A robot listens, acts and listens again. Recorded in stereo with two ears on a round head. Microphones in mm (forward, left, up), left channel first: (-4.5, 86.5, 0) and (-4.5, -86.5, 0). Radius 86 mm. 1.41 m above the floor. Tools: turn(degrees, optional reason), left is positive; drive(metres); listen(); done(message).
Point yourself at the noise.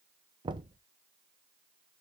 turn(degrees=-25, reason="The knocking: about 25° right or 155° right.")
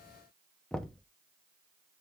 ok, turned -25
done("Facing the knocking.")